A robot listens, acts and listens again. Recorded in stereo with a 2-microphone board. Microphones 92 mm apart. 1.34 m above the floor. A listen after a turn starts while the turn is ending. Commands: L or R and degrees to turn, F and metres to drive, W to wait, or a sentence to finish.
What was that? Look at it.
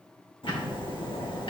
L70
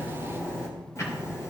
L35
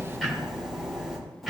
Facing the ticking, 2 to 4 m away.